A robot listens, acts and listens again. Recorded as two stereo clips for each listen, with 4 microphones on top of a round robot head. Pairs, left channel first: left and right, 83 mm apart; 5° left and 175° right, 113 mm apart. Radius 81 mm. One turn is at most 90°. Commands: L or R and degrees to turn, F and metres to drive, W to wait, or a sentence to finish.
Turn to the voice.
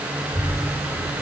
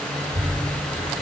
L90
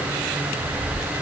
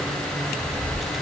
L90
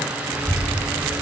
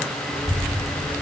Found it: a child speaking, straight ahead, over 4 m away.